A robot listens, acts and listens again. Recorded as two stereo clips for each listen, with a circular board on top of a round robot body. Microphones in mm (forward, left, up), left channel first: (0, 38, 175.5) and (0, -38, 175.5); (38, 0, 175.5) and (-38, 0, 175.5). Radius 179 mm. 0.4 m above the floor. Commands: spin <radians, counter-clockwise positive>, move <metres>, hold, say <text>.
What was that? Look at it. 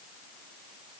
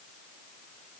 hold
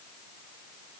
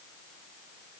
hold
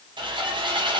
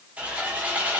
spin -1.83
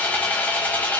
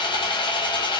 spin 0.35
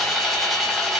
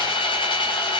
say Facing the sawing, under 1 m away.